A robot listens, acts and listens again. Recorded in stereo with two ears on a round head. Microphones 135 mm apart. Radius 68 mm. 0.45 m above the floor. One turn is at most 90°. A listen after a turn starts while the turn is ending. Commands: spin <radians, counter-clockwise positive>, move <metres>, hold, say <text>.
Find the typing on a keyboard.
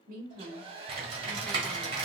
spin -0.70
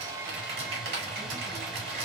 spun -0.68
spin -1.57
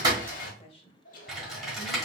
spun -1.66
say Facing the typing on a keyboard.